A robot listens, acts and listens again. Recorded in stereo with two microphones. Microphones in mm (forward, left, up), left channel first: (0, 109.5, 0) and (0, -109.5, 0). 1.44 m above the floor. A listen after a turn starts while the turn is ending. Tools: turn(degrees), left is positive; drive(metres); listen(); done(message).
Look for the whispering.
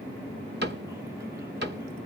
listen()
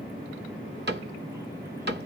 listen()
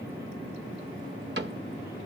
done("I can't make out whispering, only a cupboard door.")